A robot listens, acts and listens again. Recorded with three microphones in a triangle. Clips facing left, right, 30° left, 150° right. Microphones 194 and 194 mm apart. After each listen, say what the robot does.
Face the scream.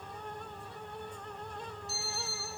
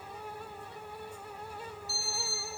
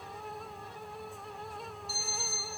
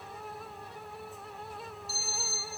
Keep listening.
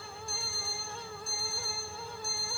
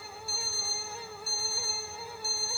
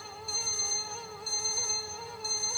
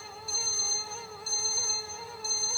Keep listening.
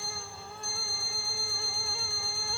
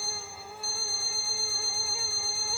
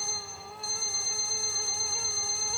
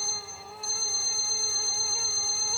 I can't make out a scream, only an alarm clock.